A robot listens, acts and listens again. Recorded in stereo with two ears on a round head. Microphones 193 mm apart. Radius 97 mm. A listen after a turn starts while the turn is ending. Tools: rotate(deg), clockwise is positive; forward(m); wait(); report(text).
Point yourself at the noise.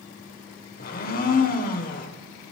rotate(-40)
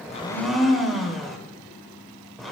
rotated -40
report("Facing the blender.")